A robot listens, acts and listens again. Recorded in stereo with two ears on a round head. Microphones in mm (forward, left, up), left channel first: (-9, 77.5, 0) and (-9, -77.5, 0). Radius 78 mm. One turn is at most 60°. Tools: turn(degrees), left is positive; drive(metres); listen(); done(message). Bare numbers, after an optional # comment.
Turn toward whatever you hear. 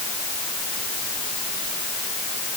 listen()
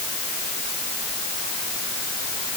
listen()
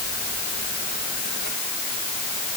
done("I can't make out anything to turn to.")